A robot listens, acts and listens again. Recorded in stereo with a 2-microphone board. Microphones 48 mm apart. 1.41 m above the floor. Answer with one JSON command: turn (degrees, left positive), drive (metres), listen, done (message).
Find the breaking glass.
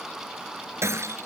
{"turn": -75}
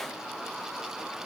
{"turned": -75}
{"listen": true}
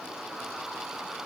{"done": "I heard breaking glass, but can't make it out now. It was about straight ahead or 30° right."}